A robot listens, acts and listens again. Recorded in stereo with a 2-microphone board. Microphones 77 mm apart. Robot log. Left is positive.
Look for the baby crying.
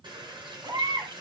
note: The baby crying: about 60° right or 120° right.
cmd yaw -60
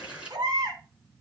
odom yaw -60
note: So it is at 60° right.
cmd yaw -60
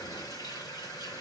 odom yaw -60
cmd idle
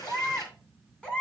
note: The baby crying is now 10° left.
cmd yaw +10
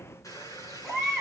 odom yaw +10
end: Facing the baby crying, 2 to 4 m away.